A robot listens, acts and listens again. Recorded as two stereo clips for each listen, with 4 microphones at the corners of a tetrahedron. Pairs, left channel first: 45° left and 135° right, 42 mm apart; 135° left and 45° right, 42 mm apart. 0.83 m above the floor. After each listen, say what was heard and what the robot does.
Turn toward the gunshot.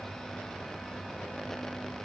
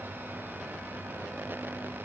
Keep listening.
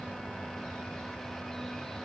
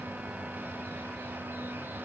Keep listening.
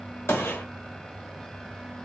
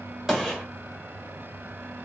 The gunshot: 25° left. Turn 25° left.
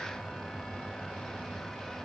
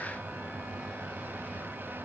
Facing where the gunshot came from. I can't hear it now.